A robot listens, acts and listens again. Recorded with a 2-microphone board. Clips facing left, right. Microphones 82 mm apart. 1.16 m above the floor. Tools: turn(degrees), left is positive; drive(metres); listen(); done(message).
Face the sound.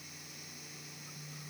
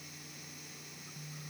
listen()
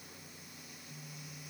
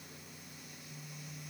listen()
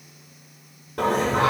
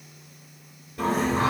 turn(degrees=90)
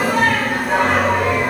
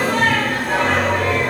done("Found it: singing, straight ahead.")